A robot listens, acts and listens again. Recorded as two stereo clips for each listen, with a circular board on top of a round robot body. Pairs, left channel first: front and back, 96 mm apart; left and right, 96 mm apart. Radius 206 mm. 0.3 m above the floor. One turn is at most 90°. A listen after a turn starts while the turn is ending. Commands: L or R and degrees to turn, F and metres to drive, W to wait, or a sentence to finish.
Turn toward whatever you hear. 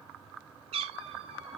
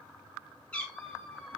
L90
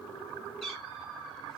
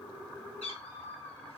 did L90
L85
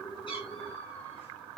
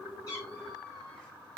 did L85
W
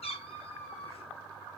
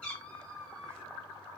L10
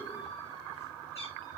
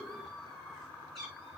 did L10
Found it: a cat meowing, straight ahead.